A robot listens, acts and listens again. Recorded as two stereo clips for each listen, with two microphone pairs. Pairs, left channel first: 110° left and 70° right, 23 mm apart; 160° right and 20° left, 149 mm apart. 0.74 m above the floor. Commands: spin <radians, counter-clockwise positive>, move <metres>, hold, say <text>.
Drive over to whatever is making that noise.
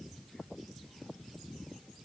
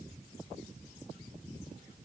hold
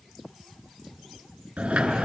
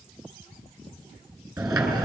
spin -0.87
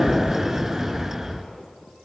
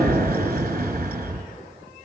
move 1.0
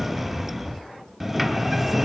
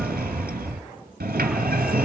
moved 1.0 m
spin 0.26
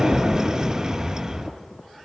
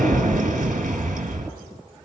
move 1.0
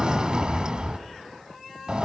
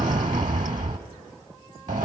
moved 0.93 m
spin -0.26
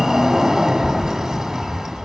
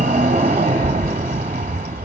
move 1.0
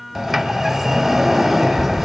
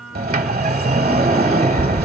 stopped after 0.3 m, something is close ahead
spin 0.26
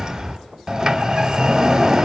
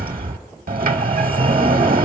say Arrived at the sliding door, straight ahead.